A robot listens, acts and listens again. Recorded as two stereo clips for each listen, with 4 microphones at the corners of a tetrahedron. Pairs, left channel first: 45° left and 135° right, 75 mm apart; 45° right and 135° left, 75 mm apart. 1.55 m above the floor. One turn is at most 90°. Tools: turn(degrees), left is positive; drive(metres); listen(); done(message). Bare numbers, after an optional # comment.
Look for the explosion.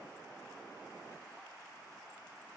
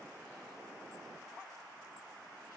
listen()
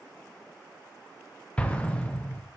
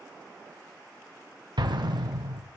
# The explosion: 120° left.
turn(90)
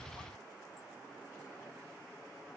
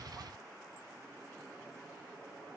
# Nothing new. It was at 30° left.
turn(30)
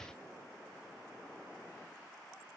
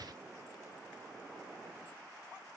done("I heard an explosion from this way, but can't make it out now.")